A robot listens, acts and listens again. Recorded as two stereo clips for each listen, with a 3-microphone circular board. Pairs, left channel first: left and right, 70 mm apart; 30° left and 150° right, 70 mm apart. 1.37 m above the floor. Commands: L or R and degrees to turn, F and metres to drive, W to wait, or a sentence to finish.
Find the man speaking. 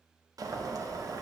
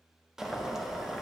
W
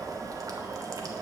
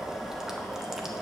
W
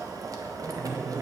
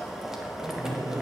R135
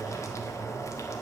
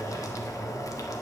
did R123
R10
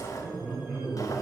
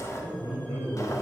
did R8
R10
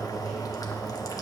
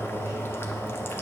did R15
Facing the man speaking.